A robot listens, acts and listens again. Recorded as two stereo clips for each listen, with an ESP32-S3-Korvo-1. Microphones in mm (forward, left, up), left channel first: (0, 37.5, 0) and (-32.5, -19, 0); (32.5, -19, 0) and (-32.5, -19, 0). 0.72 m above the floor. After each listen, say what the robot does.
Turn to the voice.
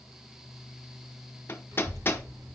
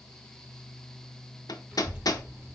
Turn 110° right.
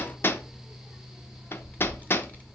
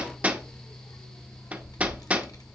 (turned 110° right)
Facing the child speaking.